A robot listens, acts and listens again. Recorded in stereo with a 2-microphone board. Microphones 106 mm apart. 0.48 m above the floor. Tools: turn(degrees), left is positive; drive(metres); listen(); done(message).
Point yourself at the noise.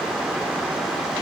listen()
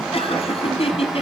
turn(degrees=65)
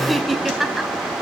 done("Found it: laughter, straight ahead, 2 to 4 m away.")